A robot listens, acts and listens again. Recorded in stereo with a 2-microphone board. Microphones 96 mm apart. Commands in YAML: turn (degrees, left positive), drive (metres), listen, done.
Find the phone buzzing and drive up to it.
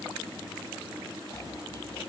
listen: true
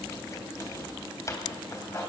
listen: true
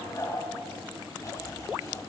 done: "I can't make out a phone buzzing, only chopping."